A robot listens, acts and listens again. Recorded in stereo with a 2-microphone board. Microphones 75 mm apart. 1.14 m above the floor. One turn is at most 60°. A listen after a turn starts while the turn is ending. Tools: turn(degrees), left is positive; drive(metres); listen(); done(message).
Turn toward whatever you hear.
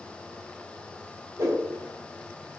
turn(degrees=-50)
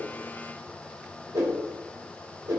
turn(degrees=-60)
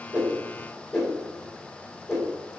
done("Found it: a whoosh, straight ahead.")